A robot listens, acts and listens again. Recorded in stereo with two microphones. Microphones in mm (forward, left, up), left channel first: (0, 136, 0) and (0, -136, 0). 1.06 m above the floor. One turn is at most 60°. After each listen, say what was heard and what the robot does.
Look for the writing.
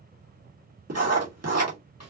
The writing: about 70° right or 110° right. Turn 60° right.
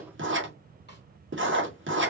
So it is at 50° right. Turn 50° right.
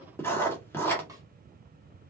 The writing is now 10° left. Turn 10° left.
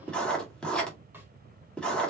Found it: writing, straight ahead.